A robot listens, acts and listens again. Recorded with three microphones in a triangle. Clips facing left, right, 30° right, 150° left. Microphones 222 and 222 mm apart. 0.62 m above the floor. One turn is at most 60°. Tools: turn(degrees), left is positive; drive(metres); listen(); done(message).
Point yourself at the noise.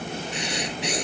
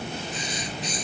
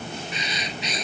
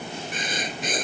turn(degrees=60)
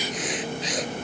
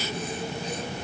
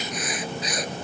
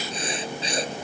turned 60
turn(degrees=60)
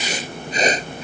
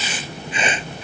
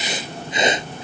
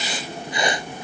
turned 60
turn(degrees=40)
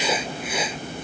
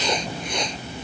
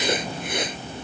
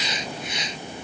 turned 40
done("Found it: writing, straight ahead.")